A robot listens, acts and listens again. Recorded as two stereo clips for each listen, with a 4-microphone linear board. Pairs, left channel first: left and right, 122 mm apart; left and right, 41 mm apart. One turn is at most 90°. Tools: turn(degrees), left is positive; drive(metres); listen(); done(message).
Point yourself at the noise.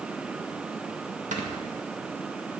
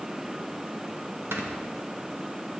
turn(degrees=-90)
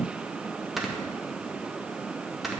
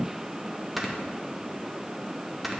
done("Found it: snoring, straight ahead, 1 to 2 m away.")